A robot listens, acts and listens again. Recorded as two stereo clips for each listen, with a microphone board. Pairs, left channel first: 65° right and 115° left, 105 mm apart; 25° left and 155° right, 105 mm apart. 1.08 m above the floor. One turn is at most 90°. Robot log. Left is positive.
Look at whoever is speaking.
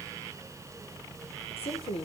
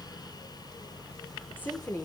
note: The woman speaking: 45° right.
cmd yaw -45
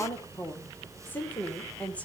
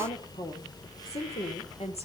note: The woman speaking is now 10° left.
cmd yaw +10
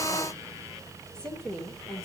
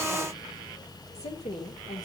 note: The woman speaking is now 15° left.
cmd yaw +15
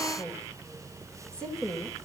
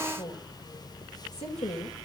note: The woman speaking is now 15° left.
cmd yaw +15
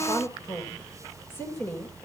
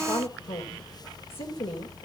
end: Found it: a woman speaking, straight ahead.